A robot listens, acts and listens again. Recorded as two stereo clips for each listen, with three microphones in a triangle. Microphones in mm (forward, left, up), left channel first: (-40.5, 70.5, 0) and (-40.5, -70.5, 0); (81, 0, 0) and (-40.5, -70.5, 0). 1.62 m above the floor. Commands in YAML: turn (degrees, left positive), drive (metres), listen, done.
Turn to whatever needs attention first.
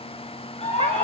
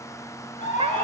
turn: 50
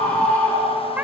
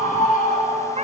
turn: 10
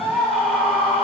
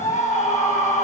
done: "Found it: a scream, straight ahead, over 4 m away."